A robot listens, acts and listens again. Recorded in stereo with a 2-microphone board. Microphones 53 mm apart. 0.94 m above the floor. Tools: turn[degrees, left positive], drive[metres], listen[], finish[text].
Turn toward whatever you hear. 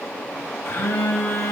Thought: The phone buzzing: about 50° left or 130° left.
Action: turn[50]
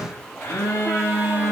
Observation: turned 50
Thought: So it is at 80° left.
Action: turn[80]
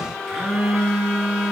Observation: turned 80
Thought: The phone buzzing is now 10° right.
Action: turn[-10]
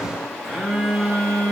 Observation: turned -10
Action: finish[Facing the phone buzzing, 2 to 4 m away.]